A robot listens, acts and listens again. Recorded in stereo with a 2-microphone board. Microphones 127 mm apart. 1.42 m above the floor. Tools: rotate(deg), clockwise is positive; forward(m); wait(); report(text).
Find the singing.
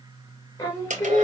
rotate(-25)
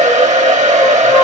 wait()
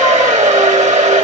wait()
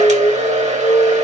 rotate(-25)
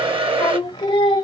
rotate(-35)
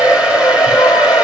wait()
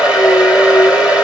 rotate(-35)
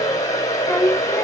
rotate(-15)
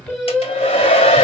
report("Found it: singing, straight ahead.")